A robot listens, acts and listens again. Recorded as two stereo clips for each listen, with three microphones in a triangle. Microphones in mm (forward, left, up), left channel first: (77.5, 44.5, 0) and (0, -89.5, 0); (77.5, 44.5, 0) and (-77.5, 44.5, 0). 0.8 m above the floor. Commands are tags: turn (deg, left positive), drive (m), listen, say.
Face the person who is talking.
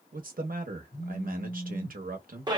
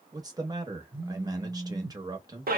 <turn deg="-120"/>
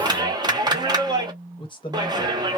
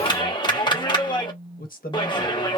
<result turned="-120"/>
<say>Facing the man speaking.</say>